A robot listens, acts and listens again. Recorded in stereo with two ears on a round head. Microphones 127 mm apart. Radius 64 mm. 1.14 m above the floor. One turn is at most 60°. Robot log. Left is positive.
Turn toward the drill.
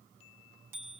cmd idle
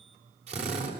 note: The drill: about 50° right or 130° right.
cmd yaw -50
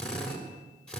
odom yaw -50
end: Facing the drill, over 4 m away.